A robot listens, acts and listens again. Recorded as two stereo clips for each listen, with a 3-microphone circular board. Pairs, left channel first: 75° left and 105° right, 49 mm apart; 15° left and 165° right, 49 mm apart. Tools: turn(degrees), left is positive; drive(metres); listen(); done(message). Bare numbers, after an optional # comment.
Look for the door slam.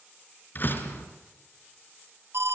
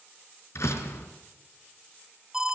# The door slam: 30° left.
turn(30)
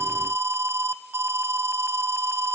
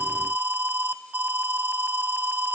done("Facing where the door slam came from. I can't hear it now.")